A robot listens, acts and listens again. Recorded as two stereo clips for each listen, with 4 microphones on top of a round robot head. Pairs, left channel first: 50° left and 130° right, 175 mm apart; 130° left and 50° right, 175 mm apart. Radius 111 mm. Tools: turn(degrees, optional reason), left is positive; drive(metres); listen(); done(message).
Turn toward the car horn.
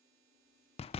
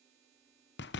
listen()
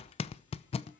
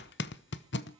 listen()
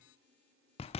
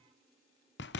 done("I can't make out a car horn to turn to.")